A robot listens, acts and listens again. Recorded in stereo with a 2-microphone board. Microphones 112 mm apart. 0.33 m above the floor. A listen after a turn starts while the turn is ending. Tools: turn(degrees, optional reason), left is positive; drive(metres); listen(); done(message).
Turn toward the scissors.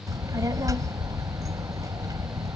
listen()
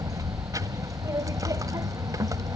listen()
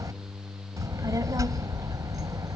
done("I can't make out scissors to turn to.")